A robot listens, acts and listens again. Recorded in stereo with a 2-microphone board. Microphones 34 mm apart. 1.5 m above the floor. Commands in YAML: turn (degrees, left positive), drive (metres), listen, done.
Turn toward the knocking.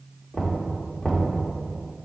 turn: 20
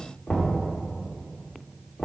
turn: 145
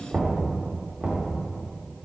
turn: -20
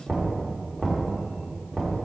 done: "Found it: knocking, straight ahead."